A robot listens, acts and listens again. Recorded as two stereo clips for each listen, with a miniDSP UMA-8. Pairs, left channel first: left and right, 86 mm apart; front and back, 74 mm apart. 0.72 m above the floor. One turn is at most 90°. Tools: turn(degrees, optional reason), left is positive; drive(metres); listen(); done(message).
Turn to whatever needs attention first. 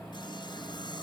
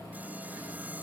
listen()
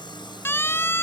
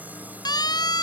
turn(degrees=25, reason="The siren: 25° left.")
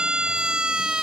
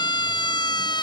turn(degrees=-10, reason="The siren is now 10° right.")
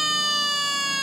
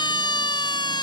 done("Found it: a siren, straight ahead.")